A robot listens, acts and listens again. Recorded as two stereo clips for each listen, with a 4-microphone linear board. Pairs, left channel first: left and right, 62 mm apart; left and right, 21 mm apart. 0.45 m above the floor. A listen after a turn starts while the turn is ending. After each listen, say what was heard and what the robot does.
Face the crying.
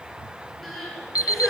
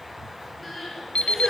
Turn 30° left.
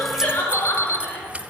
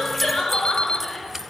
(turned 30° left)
So it is at 150° left. Turn 150° left.
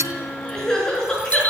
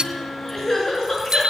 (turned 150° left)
The crying is now 10° left. Turn 10° left.
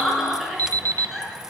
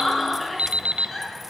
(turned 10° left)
Facing the crying, over 4 m away.